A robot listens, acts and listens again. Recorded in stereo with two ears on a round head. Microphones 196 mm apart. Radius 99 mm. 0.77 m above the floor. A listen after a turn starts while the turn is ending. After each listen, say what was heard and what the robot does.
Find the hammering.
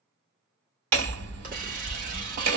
The hammering: about 75° right or 105° right. Turn 75° right.
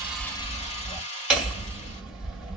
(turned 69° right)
Found it: hammering, straight ahead, 2 to 4 m away.